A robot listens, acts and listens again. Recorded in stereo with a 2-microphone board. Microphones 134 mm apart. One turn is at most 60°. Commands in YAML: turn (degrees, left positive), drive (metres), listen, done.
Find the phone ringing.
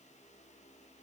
listen: true
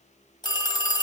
turn: 35
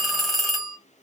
done: "Facing the phone ringing."